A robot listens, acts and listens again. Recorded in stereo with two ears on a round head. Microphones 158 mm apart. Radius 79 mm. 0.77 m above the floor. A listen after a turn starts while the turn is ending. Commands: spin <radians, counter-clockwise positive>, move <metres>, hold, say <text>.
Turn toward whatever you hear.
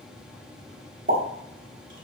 spin -0.79
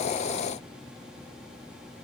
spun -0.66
hold
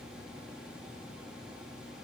say I heard a pop, but can't make it out now. It was about 5° right or 95° right.